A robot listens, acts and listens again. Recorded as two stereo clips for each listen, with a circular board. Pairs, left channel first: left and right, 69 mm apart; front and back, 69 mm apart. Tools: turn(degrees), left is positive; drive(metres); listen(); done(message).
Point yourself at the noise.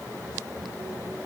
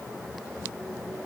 listen()
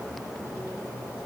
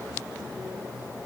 listen()
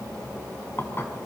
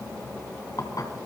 turn(degrees=35)
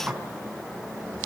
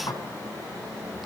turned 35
turn(degrees=-15)
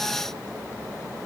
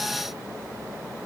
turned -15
listen()
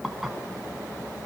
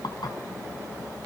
done("Facing the dishes clattering.")